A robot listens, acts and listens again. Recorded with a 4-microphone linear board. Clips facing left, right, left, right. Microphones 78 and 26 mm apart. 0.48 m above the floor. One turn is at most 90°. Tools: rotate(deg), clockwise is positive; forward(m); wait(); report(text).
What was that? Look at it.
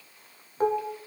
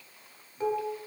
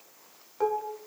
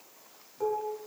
rotate(-50)
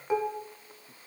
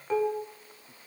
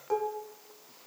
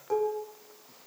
rotate(-15)
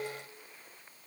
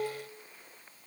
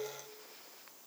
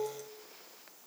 report("Found it: dishes clattering, straight ahead.")